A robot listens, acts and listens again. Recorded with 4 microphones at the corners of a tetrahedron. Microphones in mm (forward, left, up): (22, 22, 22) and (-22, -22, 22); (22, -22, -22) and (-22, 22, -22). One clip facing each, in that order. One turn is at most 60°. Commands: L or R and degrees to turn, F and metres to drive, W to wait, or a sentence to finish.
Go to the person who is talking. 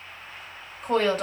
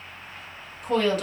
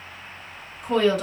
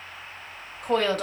L60
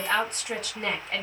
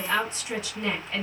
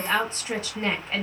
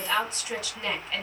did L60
L10
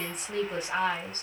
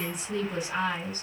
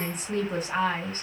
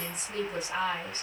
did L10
F1.0
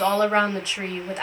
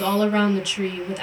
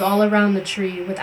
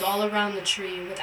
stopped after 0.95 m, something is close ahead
I am next to the woman speaking.